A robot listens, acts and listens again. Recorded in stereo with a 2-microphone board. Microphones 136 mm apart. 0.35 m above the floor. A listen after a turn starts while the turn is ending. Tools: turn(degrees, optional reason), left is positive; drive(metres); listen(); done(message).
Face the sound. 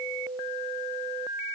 listen()
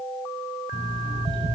turn(degrees=-35, reason="The alarm clock: about 35° right or 145° right.")
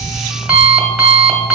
turn(degrees=-10, reason="So it is at 10° right.")
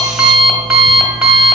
done("Facing the alarm clock, 1 to 2 m away.")